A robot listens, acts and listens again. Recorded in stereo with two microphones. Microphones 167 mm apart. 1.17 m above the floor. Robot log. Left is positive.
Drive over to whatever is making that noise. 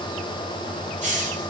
note: The hiss: about 45° right or 135° right.
cmd yaw -45
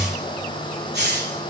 note: So it is at 90° right.
cmd yaw -90
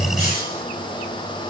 cmd idle
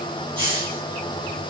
note: The hiss is now 30° right.
cmd yaw -30
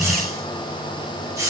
note: The hiss is now 20° right.
cmd yaw -20
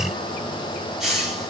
cmd fwd 1.0
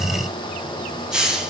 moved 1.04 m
cmd fwd 1.0
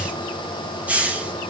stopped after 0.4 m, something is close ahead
note: The hiss is now 10° right.
cmd yaw -10
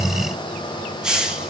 end: I am next to the hiss.